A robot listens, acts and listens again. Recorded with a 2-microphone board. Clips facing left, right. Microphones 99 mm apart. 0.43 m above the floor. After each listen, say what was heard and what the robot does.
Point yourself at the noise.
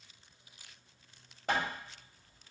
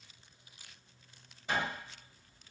The hammering: about 60° left or 120° left. Turn 60° left.
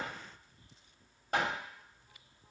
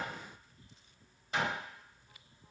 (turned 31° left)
So it is at 70° left. Turn 70° left.
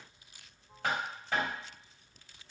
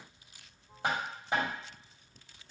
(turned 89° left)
The hammering is now 20° right. Turn 20° right.
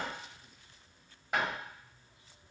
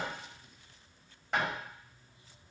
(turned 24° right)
Facing the hammering, 1 to 2 m away.